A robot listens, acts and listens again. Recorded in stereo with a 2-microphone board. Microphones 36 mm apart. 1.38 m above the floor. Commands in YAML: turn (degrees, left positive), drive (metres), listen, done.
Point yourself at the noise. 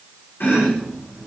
turn: 65
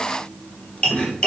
turn: 35
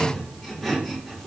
done: "Found it: chopping, straight ahead, under 1 m away."